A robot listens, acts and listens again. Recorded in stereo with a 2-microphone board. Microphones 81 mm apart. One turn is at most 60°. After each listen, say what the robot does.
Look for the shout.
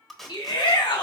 Turn 60° left.
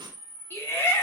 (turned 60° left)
Turn 30° left.
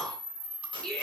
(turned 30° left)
Turn 10° left.
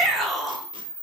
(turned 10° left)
Found it: a shout, straight ahead, 1 to 2 m away.